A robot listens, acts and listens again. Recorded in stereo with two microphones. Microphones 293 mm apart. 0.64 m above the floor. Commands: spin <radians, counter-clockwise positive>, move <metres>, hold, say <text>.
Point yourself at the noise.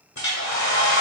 spin 1.22
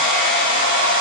spin 0.70
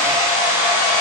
spin -0.17
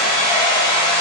say Facing the hair dryer.